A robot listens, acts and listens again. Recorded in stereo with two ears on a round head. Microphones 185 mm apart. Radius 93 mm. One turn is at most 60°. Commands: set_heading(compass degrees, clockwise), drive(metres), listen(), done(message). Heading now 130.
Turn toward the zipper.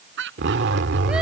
set_heading(185)
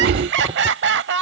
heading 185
listen()
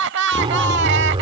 set_heading(215)
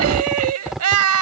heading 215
done("Found it: a zipper, straight ahead.")